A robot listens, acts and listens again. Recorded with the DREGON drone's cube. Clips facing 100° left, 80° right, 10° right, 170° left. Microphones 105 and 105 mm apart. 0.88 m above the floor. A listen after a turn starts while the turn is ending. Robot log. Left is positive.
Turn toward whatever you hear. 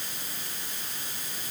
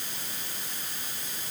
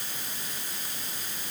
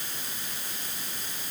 cmd idle
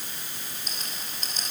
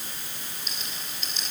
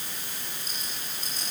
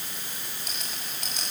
note: The rattle: 150° left.
cmd yaw +150
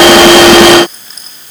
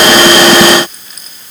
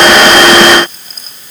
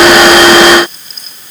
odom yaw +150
cmd idle
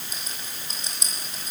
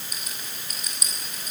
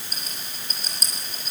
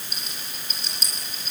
note: The rattle is now 40° left.
cmd yaw +40
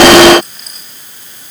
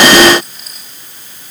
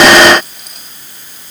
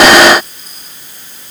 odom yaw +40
cmd idle
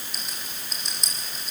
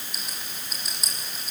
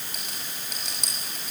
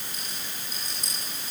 end: Facing the rattle.